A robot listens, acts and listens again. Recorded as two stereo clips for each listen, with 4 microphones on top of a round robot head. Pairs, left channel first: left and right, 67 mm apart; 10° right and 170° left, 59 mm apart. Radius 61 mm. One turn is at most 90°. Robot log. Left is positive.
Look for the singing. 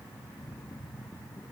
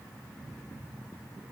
cmd idle
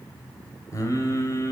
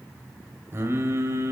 note: The singing: 130° left.
cmd yaw +90
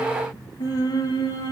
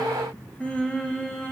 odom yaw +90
note: The singing is now 65° left.
cmd yaw +65
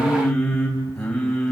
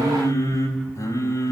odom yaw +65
note: The singing is now 10° left.
cmd yaw +10
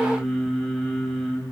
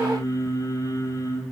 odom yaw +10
end: Found it: singing, straight ahead.